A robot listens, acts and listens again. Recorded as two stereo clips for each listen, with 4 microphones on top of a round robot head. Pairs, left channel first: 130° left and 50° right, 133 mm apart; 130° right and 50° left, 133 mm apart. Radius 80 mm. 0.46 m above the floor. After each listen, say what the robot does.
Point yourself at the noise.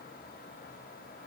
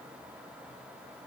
Keep listening.
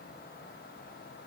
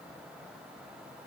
Keep listening.
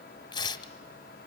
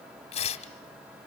Turn 175° right.
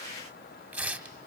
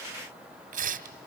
Turn 30° left.
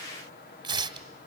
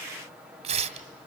Found it: tearing paper, straight ahead, 1 to 2 m away.